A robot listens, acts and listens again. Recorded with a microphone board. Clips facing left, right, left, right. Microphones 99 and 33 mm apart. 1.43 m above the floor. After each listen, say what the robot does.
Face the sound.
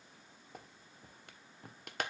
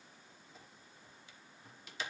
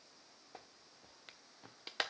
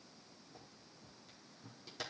Turn 60° left.
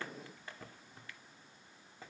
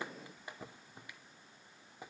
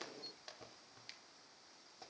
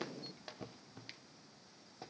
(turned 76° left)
Turn 15° right.
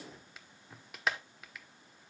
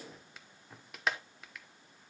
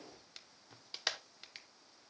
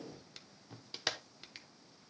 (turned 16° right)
Found it: a clap, straight ahead.